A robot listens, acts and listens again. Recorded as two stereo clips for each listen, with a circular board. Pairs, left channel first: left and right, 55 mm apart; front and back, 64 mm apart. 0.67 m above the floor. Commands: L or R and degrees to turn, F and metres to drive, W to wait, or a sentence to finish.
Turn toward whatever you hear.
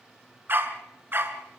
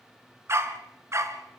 R140
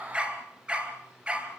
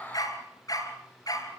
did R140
R20
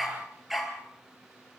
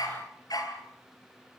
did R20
Facing the dog barking.